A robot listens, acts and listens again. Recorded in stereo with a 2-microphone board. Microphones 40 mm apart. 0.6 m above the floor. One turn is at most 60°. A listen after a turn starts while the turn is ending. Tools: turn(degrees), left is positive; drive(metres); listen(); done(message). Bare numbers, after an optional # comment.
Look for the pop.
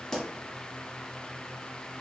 turn(30)
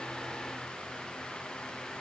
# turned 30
listen()
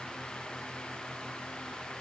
done("I heard a pop, but can't make it out now. It was about 15° right or 135° left.")